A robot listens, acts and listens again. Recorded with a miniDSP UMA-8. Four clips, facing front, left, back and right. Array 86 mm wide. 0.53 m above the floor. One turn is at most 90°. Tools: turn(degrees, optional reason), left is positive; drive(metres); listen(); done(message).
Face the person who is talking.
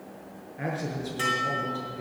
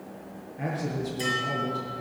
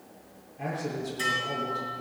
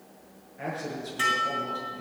done("Facing the man speaking, over 4 m away.")